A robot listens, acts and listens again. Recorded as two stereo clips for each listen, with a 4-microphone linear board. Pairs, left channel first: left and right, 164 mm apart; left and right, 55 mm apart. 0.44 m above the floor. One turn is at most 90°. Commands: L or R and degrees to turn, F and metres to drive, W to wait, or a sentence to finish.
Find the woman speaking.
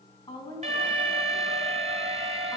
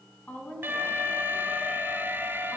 L30
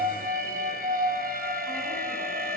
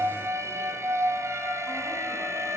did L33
W
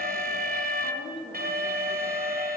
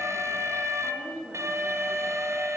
L35
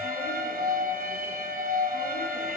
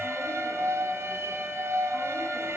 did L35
W
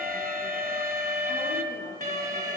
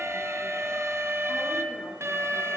W
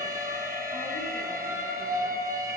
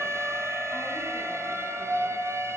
I heard a woman speaking, but can't make it out now. It was about straight ahead or 110° left.